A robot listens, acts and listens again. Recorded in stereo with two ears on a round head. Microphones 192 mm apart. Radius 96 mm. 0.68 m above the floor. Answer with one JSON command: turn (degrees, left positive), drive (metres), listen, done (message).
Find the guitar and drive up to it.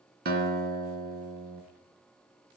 {"turn": -45}
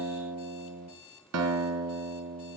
{"turn": -85}
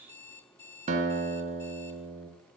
{"turn": -35}
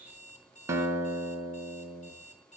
{"turn": -15}
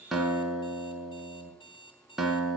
{"drive": 1.0}
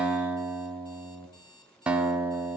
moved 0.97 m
{"drive": 1.0}
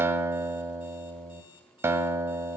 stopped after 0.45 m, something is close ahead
{"turn": -10}
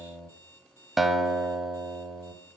{"done": "I am next to the guitar."}